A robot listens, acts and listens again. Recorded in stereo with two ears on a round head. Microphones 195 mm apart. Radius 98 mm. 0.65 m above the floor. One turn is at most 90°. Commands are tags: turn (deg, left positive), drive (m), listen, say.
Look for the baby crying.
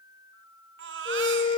<turn deg="-60"/>
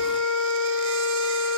<listen/>
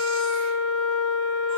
<listen/>
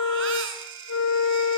<turn deg="-60"/>
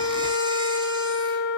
<listen/>
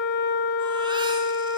<listen/>
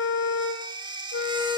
<turn deg="-20"/>
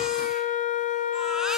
<listen/>
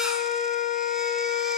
<listen/>
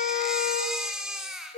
<say>Found it: a baby crying, straight ahead, over 4 m away.</say>